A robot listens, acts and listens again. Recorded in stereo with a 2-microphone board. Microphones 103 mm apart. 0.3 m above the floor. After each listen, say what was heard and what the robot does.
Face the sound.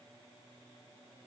Keep listening.
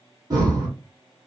The breathing: about 35° right or 145° right. Turn 35° right.
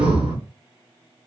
So it is at 110° right. Turn 110° right.
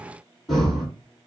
Found it: breathing, straight ahead, 1 to 2 m away.